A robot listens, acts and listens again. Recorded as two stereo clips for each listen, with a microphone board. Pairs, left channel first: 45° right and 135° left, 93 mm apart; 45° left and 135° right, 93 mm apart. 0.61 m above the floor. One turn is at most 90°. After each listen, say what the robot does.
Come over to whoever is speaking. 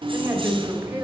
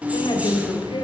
Turn 75° left.
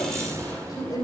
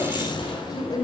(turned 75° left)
Drive 1.0 m forward.
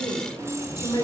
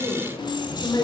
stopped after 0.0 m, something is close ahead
Blocked. The woman speaking is further on, straight ahead.